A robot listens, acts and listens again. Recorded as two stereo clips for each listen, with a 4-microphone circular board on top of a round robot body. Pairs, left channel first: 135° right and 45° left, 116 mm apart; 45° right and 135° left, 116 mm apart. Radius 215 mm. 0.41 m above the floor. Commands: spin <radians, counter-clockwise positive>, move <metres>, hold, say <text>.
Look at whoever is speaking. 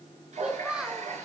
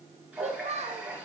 spin 2.27
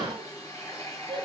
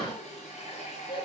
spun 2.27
say Facing the child speaking, 1 to 2 m away.